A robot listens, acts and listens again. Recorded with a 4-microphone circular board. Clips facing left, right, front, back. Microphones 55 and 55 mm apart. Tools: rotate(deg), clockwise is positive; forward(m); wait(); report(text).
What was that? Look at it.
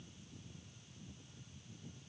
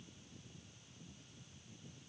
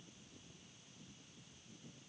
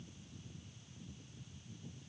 wait()
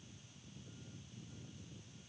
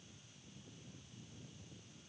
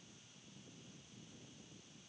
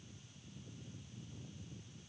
wait()
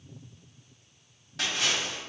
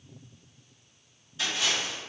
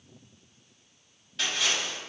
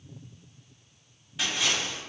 rotate(-100)
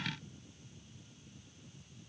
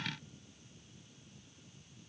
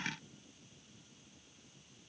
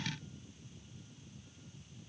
report("I heard a splash from this way, but can't make it out now.")